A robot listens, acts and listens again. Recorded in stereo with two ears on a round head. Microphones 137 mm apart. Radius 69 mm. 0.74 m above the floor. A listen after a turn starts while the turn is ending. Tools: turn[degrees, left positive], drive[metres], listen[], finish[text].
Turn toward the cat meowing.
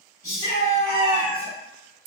Action: turn[-30]
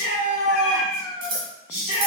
Thought: So it is at 15° left.
Action: turn[15]
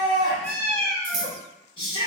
Action: finish[Found it: a cat meowing, straight ahead.]